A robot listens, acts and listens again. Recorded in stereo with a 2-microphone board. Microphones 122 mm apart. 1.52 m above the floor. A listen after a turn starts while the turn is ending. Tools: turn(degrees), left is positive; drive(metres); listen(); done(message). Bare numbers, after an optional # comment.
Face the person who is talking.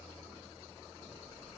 listen()
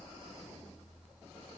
listen()
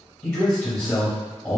# The man speaking: about 20° left or 160° left.
turn(20)
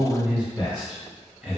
done("Found it: a man speaking, straight ahead, under 1 m away.")